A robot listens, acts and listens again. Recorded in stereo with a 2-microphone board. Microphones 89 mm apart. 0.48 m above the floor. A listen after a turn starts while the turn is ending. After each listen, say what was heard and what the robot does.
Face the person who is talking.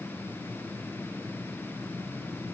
Keep listening.
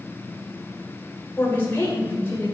The woman speaking: about 25° left or 155° left. Turn 25° left.
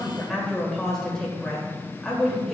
Facing the woman speaking, 2 to 4 m away.